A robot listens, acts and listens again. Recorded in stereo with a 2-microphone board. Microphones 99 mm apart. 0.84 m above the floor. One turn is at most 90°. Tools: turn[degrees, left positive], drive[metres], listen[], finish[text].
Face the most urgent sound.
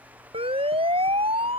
Thought: The siren: about 75° right or 105° right.
Action: turn[-75]
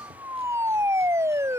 Thought: So it is at 30° right.
Action: turn[-30]
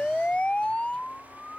Thought: The siren is now 15° left.
Action: turn[15]
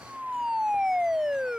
Action: finish[Facing the siren.]